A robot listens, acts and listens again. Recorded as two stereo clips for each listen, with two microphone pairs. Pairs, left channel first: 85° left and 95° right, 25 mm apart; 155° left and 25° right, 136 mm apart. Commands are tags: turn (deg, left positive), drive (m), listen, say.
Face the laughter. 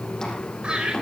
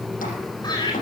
<turn deg="-145"/>
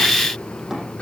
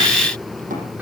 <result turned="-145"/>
<listen/>
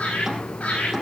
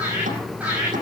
<turn deg="55"/>
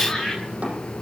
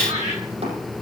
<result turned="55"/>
<turn deg="10"/>
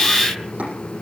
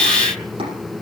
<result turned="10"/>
<listen/>
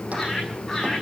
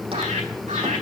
<say>Facing the laughter, over 4 m away.</say>